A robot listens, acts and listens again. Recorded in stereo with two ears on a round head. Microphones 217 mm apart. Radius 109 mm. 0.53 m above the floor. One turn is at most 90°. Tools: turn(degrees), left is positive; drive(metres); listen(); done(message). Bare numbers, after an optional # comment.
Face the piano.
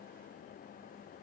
listen()
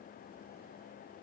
listen()
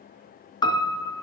# The piano: about 20° left or 160° left.
turn(20)
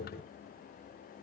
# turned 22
listen()
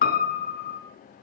# So it is at 140° left.
turn(90)
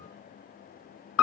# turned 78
# The piano is now 60° left.
turn(60)
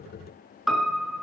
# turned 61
done("Facing the piano.")